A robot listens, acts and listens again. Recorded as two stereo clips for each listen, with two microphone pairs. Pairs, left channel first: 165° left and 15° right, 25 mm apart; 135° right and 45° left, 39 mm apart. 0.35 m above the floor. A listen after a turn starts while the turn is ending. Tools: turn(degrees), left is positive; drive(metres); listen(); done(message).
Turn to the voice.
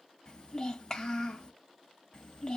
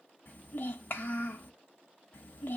turn(degrees=-140)
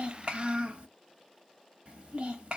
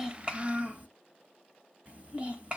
done("Facing the child speaking.")